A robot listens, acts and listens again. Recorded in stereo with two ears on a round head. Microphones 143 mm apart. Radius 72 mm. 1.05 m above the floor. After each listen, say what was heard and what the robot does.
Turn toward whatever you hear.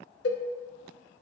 Turn 90° left.
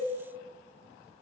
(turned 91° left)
Keep listening.
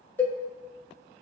The cowbell is now 10° left. Turn 10° left.
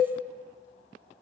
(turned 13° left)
Facing the cowbell.